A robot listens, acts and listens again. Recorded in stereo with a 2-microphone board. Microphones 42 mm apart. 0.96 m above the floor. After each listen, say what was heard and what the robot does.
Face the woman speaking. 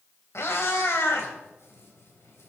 Keep listening.
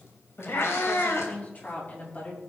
The woman speaking: about 40° left or 140° left. Turn 40° left.
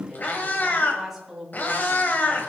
Facing the woman speaking, over 4 m away.